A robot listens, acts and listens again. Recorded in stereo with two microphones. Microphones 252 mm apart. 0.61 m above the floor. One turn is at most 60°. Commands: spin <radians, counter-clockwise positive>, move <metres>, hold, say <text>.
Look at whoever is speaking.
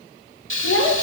spin 0.96
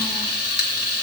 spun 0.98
hold
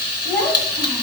say Found it: a child speaking, straight ahead, 2 to 4 m away.